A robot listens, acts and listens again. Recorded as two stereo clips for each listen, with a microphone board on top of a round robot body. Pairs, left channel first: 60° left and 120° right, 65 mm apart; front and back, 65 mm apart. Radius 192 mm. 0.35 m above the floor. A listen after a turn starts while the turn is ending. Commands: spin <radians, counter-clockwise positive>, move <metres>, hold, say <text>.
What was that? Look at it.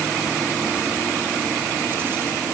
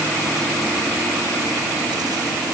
hold
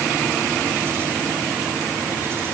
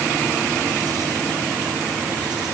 hold
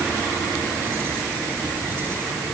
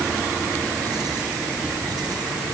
say I can't make out anything to turn to.